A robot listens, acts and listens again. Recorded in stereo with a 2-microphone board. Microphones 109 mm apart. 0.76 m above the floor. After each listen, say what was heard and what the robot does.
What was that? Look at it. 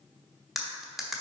Turn 30° left.
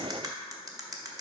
So it is at 35° right. Turn 35° right.
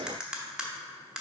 The cutlery clinking is now 10° right. Turn 10° right.
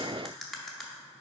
Facing the cutlery clinking.